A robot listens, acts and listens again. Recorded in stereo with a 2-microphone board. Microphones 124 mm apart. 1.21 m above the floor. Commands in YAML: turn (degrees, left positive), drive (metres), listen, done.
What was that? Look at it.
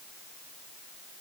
listen: true
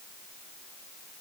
listen: true
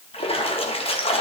turn: 50
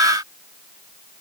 listen: true
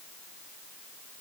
done: "I heard a splash, but can't make it out now. It was about straight ahead or 80° left."